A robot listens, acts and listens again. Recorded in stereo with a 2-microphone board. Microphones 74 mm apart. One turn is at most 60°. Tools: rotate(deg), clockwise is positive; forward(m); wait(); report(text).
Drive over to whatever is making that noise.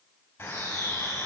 rotate(-30)
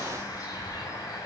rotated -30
rotate(-60)
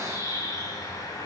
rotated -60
rotate(-60)
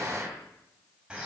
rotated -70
rotate(10)
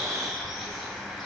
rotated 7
forward(1.0)
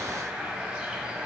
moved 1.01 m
rotate(10)
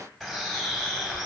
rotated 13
forward(1.0)
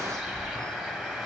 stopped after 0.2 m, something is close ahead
report("Arrived at the bird, straight ahead.")